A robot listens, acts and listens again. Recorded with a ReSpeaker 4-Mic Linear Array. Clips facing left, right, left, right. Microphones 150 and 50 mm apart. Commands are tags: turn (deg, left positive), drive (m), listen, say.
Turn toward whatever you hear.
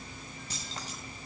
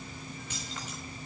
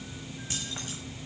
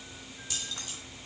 <turn deg="35"/>
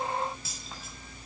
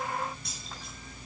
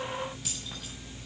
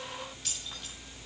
<say>Facing the keys jangling, over 4 m away.</say>